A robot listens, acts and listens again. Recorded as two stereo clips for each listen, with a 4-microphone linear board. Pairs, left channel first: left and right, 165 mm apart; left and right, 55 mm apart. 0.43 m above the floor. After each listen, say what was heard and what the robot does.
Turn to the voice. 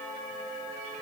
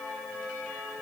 Keep listening.
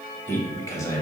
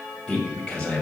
The man speaking: about 20° left or 160° left. Turn 20° left.
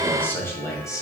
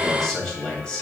The man speaking: about 20° left or 160° left. Turn 20° left.
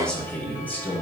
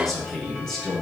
Turn 30° left.
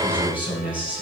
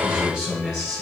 Found it: a man speaking, straight ahead.